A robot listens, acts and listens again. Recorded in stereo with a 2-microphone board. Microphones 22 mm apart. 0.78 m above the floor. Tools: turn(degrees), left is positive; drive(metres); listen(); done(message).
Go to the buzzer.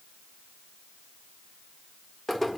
listen()
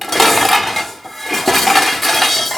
listen()
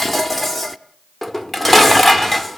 done("I can't make out a buzzer, only dishes clattering.")